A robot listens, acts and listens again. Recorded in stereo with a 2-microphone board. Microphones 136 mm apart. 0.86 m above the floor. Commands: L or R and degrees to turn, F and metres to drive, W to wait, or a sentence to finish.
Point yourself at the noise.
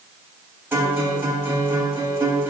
R15
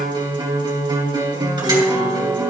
R145
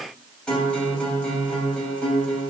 Facing the guitar.